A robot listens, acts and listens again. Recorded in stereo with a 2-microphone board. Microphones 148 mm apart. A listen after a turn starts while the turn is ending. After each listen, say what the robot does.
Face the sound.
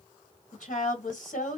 Turn 60° left.
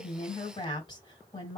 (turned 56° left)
Turn 35° left.
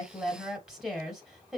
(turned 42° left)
Found it: a woman speaking, straight ahead, 1 to 2 m away.